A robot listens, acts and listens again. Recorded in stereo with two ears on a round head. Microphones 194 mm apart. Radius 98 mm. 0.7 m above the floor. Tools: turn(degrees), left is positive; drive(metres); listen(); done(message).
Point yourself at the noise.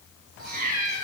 turn(degrees=-35)
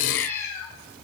turn(degrees=15)
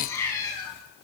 turn(degrees=20)
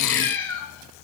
turn(degrees=15)
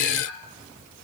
listen()
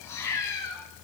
turn(degrees=20)
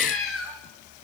done("Facing the cat meowing.")